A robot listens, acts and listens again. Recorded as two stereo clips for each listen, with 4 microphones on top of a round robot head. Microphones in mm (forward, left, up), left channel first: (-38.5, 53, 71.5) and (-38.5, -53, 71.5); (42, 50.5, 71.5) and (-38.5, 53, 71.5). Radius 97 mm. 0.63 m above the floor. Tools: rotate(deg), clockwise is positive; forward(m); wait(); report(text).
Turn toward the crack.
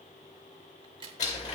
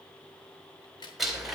rotate(45)
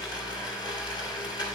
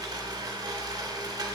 report("I heard a crack from this way, but can't make it out now.")